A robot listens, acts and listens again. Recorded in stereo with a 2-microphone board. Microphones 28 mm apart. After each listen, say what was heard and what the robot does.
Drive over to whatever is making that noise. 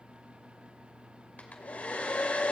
The hair dryer: about 65° left or 115° left. Turn 65° left.
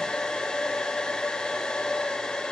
So it is at 35° left. Turn 35° left.
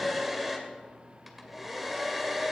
Drive 1.0 m forward.
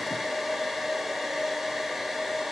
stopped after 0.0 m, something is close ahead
The hair dryer is now 10° right. Turn 10° right.
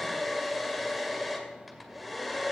Something is in my way. I am facing the hair dryer but have not reached it.